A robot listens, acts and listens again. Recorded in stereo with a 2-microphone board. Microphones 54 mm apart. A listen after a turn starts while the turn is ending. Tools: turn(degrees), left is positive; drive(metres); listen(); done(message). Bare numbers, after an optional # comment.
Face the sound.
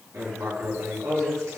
# The writing: about 70° right or 110° right.
turn(-70)
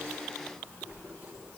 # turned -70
# So it is at 35° right.
turn(-35)
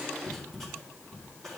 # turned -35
done("Found it: writing, straight ahead.")